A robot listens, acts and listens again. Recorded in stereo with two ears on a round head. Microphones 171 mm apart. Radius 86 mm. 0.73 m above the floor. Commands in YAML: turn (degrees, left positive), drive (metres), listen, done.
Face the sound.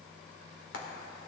turn: 65
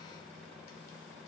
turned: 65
listen: true
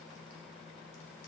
listen: true
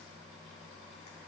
done: "I heard frying, but can't make it out now. It was about straight ahead or 50° left."